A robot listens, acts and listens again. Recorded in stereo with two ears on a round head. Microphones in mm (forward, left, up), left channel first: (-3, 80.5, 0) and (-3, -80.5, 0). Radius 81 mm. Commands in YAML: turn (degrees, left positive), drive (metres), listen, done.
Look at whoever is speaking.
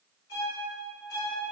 listen: true
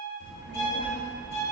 turn: -60
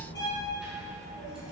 done: "Facing the child speaking."